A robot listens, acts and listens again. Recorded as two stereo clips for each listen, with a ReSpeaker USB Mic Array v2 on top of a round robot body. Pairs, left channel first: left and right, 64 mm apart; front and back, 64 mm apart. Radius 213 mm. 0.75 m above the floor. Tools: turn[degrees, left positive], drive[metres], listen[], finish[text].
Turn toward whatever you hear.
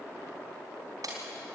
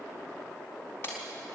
Thought: The breaking glass: 55° right.
Action: turn[-55]
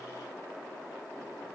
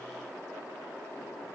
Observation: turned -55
Action: finish[Facing where the breaking glass came from. I can't hear it now.]